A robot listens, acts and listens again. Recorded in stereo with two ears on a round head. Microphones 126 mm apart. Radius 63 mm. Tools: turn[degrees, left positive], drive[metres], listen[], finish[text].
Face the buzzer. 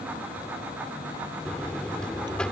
Action: turn[30]
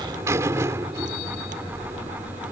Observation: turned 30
Thought: So it is at 20° right.
Action: turn[-20]
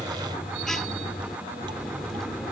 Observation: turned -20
Action: finish[Facing the buzzer.]